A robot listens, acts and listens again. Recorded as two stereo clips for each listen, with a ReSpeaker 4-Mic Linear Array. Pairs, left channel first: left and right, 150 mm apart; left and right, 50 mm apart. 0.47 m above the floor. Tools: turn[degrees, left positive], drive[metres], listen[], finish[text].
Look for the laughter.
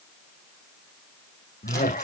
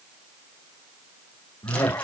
Thought: The laughter: about 60° left or 120° left.
Action: turn[60]
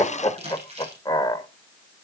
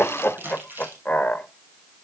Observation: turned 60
Thought: So it is at 30° left.
Action: turn[30]
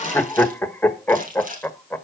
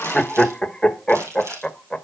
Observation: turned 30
Thought: The laughter is now 15° left.
Action: turn[15]
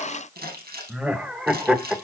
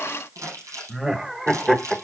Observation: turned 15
Action: finish[Facing the laughter, 1 to 2 m away.]